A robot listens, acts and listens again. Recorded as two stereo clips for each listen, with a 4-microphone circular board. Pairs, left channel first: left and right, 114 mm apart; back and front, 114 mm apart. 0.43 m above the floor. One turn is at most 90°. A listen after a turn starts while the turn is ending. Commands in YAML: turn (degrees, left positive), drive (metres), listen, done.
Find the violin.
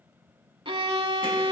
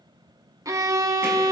turn: -55
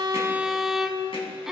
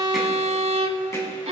done: "Found it: a violin, straight ahead."